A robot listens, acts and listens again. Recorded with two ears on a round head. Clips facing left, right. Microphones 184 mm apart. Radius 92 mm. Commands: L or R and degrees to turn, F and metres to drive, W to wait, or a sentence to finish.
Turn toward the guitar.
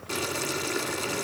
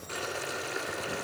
W
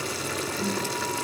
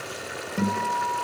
R90
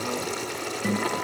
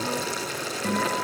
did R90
Facing the guitar.